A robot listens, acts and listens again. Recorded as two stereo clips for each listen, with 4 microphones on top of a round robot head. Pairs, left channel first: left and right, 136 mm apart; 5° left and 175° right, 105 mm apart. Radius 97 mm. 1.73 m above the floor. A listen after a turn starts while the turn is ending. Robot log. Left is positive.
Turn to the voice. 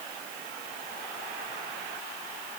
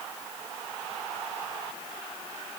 cmd idle
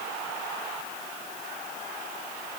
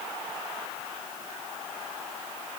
cmd idle
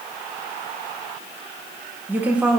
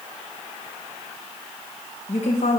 end: Found it: a woman speaking, straight ahead, 1 to 2 m away.